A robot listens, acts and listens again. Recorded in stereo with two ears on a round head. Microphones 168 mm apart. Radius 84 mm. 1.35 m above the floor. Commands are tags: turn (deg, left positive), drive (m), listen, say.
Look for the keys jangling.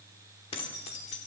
<turn deg="35"/>
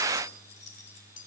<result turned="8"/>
<turn deg="45"/>
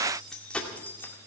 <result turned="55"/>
<turn deg="10"/>
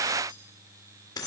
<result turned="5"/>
<turn deg="20"/>
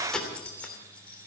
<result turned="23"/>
<say>Facing the keys jangling.</say>